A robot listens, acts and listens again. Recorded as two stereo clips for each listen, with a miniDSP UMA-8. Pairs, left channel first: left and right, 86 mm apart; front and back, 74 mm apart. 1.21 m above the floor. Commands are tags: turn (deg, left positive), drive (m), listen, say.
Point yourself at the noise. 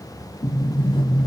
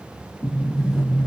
<turn deg="95"/>
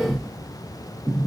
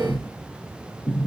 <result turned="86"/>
<turn deg="10"/>
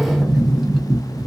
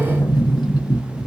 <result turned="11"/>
<say>Found it: a sliding door, straight ahead.</say>